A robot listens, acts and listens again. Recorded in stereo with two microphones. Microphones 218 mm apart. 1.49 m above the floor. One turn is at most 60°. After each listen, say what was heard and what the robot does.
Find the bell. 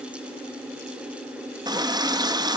Keep listening.
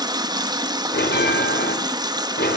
The bell: about 50° left or 130° left. Turn 50° left.
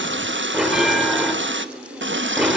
Facing the bell.